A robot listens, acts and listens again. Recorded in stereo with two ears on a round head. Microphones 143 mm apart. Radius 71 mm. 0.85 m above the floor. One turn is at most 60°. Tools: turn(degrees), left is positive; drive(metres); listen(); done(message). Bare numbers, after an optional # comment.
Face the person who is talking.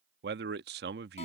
# The man speaking: about 70° right or 110° right.
turn(-60)
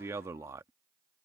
# So it is at 20° right.
turn(-20)
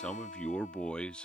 done("Found it: a man speaking, straight ahead.")